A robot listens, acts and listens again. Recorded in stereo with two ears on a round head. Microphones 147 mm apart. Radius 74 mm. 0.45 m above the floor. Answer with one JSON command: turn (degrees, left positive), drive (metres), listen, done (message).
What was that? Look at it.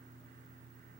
{"listen": true}
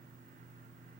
{"listen": true}
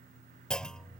{"turn": 30}
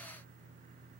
{"listen": true}
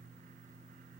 {"done": "I heard a clunk, but can't make it out now. It was about 25° right or 145° left."}